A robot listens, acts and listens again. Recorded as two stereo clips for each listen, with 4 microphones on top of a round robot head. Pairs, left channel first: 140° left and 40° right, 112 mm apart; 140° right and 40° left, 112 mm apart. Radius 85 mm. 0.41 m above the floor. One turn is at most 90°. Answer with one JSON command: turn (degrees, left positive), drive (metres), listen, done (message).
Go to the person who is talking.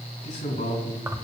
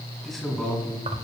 {"turn": 90}
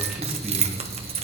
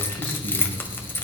{"turn": 45}
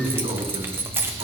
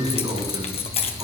{"drive": 1.0}
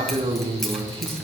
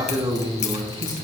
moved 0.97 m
{"drive": 1.0}
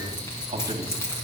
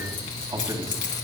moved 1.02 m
{"listen": true}
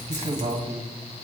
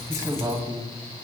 {"turn": -10}
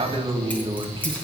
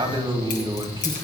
{"drive": 1.0}
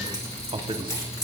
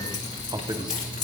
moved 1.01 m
{"drive": 1.0}
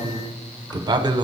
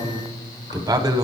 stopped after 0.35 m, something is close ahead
{"done": "Arrived at the man speaking, straight ahead."}